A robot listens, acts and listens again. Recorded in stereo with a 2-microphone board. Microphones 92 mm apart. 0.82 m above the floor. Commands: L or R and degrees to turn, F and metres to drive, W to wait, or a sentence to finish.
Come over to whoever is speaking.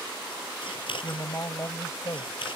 L35
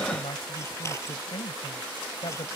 L110
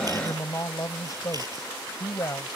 L35
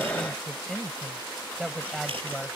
F1.0
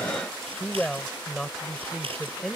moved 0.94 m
F1.0
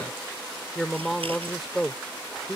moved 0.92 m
F1.0
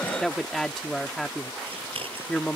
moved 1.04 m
F1.0
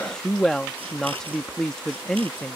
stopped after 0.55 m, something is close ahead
Arrived at the woman speaking, straight ahead.